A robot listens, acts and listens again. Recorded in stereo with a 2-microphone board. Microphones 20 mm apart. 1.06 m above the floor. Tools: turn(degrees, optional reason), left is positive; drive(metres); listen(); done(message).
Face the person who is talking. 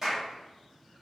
listen()
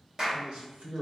turn(degrees=-60, reason="The man speaking: about 60° right or 120° right.")
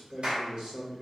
turn(degrees=-55, reason="So it is at 55° right.")
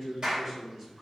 turn(degrees=-20, reason="The man speaking is now 20° right.")
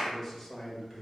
done("Facing the man speaking.")